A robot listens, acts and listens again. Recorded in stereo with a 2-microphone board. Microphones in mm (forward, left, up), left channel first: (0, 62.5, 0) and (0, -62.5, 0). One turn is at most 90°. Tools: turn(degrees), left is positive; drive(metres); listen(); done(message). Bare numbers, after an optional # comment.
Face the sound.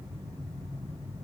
listen()
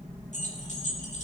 # The keys jangling: about 75° left or 105° left.
turn(75)
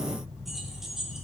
done("Found it: keys jangling, straight ahead.")